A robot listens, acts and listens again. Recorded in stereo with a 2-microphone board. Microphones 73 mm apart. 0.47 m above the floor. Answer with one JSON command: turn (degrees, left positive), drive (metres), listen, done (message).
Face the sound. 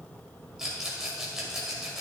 {"turn": -30}
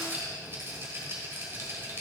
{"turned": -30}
{"turn": -140}
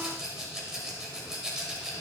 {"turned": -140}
{"turn": -10}
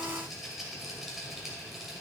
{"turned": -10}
{"done": "Found it: a rattle, straight ahead."}